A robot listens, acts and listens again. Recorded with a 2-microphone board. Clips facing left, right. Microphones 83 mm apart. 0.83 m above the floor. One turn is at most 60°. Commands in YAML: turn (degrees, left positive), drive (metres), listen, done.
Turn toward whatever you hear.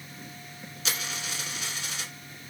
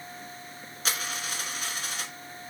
turn: -45
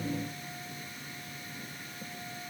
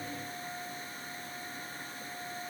listen: true
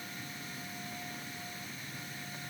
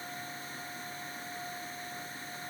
done: "I heard a dropped coin, but can't make it out now. It was about straight ahead or 90° right."